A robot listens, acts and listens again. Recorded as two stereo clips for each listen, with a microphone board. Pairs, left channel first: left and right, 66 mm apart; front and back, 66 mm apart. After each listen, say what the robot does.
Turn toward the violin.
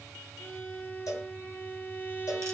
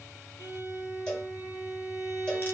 Turn 25° left.
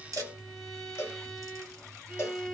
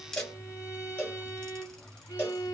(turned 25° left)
Found it: a violin, straight ahead, 1 to 2 m away.